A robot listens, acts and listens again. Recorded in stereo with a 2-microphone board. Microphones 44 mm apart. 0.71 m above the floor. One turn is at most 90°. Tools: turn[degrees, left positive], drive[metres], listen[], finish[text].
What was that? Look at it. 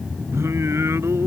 Action: turn[-90]
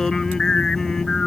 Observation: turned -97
Thought: So it is at 15° left.
Action: turn[15]
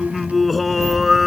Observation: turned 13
Action: finish[Facing the singing.]